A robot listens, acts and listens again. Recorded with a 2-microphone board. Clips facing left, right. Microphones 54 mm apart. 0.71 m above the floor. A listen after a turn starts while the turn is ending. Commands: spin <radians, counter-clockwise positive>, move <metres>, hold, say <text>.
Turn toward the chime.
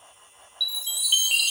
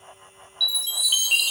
spin 0.52
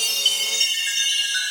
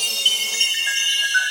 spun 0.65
spin -0.52
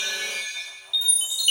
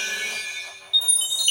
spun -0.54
say Facing the chime, 2 to 4 m away.